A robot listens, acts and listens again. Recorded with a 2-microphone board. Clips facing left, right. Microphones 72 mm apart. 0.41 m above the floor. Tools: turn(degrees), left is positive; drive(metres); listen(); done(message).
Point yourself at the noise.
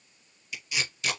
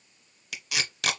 turn(degrees=-90)
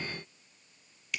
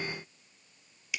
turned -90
done("Facing the tape being pulled, under 1 m away.")